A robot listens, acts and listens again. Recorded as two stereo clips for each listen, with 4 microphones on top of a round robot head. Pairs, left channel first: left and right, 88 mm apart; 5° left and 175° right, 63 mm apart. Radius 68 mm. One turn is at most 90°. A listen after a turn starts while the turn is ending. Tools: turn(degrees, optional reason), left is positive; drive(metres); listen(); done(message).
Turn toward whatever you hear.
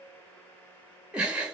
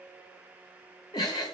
turn(degrees=-15, reason="The giggle: 15° right.")
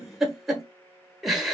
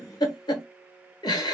done("Facing the giggle.")